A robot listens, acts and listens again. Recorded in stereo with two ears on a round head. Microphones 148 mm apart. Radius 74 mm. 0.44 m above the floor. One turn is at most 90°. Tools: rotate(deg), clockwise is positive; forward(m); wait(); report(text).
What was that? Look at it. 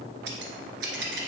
rotate(90)
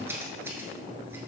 rotate(15)
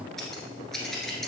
report("Found it: scissors, straight ahead.")